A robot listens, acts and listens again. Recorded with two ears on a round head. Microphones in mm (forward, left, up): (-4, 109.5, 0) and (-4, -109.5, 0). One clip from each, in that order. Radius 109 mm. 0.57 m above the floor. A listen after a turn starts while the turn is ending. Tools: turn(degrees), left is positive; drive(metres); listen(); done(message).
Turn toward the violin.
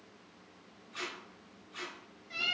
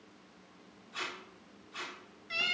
listen()
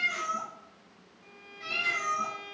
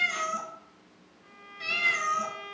turn(degrees=30)
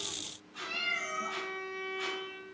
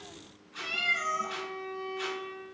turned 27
turn(degrees=135)
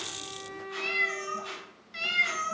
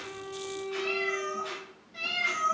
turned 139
done("Found it: a violin, straight ahead, under 1 m away.")